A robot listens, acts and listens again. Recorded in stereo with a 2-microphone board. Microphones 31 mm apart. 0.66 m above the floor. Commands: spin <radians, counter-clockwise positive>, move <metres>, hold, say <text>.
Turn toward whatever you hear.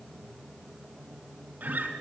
spin -1.57
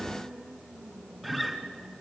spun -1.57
say Facing the guitar.